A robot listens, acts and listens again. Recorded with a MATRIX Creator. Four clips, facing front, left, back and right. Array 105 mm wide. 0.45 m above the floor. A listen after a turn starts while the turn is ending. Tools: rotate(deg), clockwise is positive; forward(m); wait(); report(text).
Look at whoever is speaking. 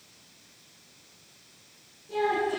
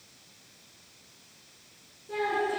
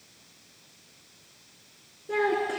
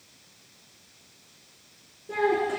rotate(160)
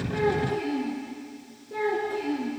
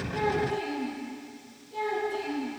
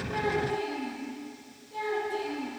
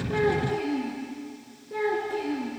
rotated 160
rotate(45)
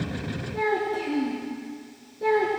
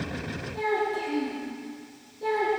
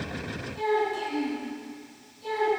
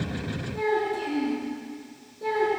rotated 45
report("Found it: a child speaking, straight ahead.")